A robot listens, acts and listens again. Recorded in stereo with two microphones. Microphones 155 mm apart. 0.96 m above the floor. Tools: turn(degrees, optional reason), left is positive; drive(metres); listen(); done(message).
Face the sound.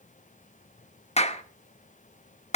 turn(degrees=45, reason="The clap: about 45° left or 135° left.")
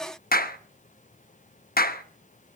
turn(degrees=90, reason="So it is at 90° left.")
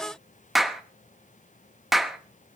done("Facing the clap.")